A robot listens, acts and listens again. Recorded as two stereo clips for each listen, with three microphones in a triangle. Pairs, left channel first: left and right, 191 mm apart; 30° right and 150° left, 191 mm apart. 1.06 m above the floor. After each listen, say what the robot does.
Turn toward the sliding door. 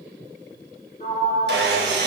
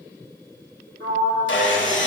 Turn 140° left.
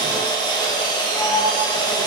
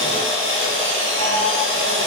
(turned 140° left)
Found it: a sliding door, straight ahead.